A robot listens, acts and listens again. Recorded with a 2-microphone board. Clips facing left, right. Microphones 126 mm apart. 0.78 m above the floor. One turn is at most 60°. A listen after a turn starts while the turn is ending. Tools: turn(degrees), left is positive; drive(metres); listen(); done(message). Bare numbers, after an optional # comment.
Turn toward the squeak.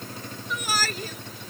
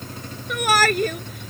listen()
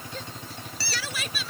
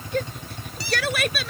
# The squeak: about 20° right or 160° right.
turn(-20)
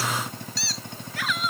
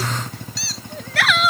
done("Found it: a squeak, straight ahead.")